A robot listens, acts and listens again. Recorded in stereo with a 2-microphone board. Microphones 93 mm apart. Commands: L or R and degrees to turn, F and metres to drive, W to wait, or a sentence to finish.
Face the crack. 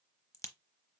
L35
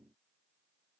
W
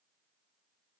I heard a crack, but can't make it out now. It was about straight ahead or 110° left.